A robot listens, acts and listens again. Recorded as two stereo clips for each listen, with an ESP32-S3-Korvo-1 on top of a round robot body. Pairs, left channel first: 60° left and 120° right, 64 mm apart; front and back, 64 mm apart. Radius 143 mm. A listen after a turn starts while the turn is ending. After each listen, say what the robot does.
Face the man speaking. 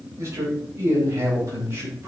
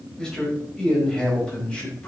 Turn 70° right.
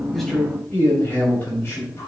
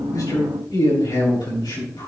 Turn 10° left.
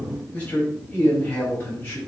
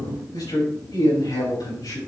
Found it: a man speaking, straight ahead.